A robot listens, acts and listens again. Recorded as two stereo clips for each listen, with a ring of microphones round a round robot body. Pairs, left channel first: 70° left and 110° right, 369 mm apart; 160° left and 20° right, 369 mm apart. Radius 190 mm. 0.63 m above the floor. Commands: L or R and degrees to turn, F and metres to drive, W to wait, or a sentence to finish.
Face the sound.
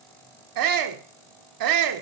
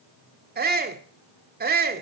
R85
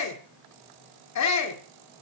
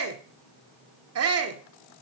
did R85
L25
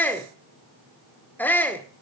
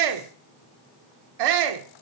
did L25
R15
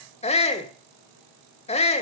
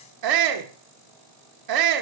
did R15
Facing the shout, 1 to 2 m away.